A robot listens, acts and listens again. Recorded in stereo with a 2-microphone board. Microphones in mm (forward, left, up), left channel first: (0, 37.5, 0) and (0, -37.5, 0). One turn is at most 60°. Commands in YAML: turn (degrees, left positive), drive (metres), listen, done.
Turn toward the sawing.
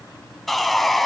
turn: 30
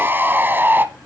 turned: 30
turn: -30
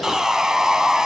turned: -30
turn: -10
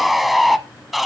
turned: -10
done: "Facing the sawing, under 1 m away."